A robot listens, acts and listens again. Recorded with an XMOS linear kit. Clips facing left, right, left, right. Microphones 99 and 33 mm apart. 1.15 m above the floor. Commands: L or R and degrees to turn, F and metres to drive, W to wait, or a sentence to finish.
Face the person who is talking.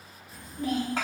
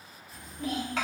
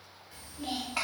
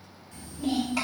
L35
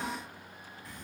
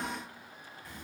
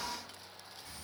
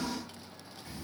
Found it: a child speaking, straight ahead.